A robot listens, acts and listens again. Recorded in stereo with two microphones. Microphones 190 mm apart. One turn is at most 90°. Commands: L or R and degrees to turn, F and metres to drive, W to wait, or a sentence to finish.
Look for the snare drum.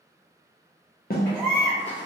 L50
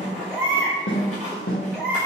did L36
L90
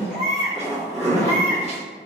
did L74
L15
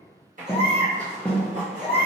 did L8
Facing the snare drum.